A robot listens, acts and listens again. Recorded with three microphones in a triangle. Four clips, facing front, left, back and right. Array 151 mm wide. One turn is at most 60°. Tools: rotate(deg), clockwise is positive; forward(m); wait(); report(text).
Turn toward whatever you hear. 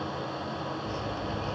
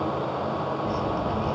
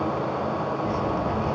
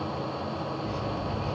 rotate(-60)
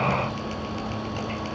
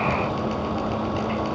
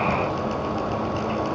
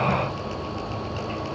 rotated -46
rotate(-60)
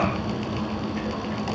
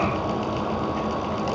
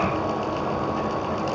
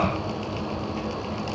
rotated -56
rotate(-40)
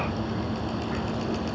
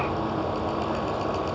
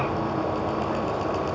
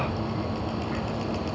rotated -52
rotate(10)
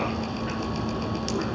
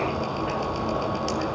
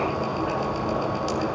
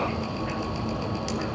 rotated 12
report("Facing the dripping, 2 to 4 m away.")